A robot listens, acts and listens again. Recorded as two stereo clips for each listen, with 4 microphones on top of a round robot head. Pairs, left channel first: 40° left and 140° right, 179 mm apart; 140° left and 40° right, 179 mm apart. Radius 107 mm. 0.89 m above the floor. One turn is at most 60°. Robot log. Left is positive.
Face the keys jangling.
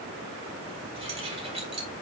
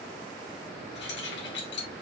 note: The keys jangling: 165° left.
cmd yaw +60
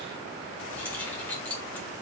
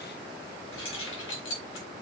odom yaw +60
note: The keys jangling is now 125° left.
cmd yaw +60
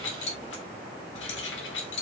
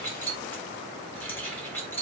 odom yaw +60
note: The keys jangling is now 60° left.
cmd yaw +60
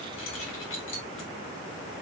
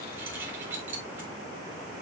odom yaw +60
note: The keys jangling is now 40° left.
cmd yaw +40
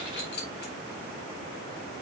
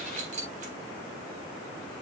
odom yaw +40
note: The keys jangling is now 10° left.
cmd yaw +10
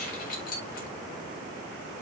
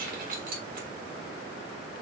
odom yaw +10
end: Found it: keys jangling, straight ahead, 2 to 4 m away.